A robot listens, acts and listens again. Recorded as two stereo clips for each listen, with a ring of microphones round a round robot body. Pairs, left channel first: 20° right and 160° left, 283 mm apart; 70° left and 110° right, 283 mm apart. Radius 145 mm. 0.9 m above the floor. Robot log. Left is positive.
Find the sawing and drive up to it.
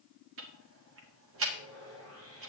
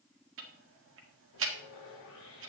note: The sawing: 115° left.
cmd yaw +115
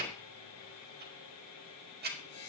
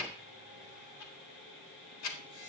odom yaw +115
note: The sawing is now 15° left.
cmd yaw +15
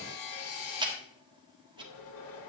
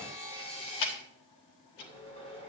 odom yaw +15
cmd fwd 1.0
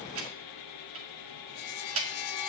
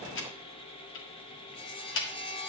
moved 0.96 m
cmd fwd 1.0
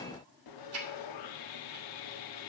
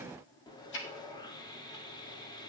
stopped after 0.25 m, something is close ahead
note: The sawing is now 10° right.
cmd yaw -10
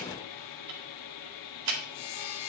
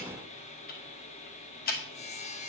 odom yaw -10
end: Arrived at the sawing, straight ahead.